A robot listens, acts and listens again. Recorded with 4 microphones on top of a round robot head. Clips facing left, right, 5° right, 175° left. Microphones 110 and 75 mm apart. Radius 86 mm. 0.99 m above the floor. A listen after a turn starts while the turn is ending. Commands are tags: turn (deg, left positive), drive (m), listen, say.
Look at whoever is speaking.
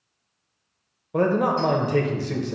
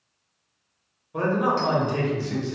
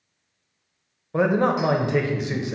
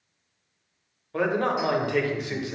<turn deg="65"/>
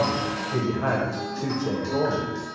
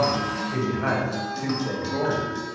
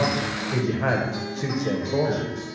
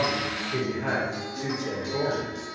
<turn deg="20"/>
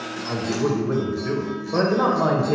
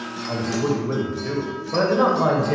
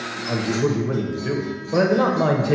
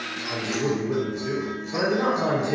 <say>Facing the man speaking, under 1 m away.</say>